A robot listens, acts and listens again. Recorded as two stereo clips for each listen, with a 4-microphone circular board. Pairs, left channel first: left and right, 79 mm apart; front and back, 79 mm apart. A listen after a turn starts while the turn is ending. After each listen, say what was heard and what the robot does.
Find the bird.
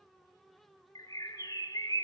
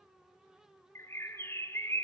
The bird: 55° left. Turn 55° left.
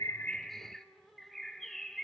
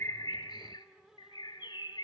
Found it: a bird, straight ahead.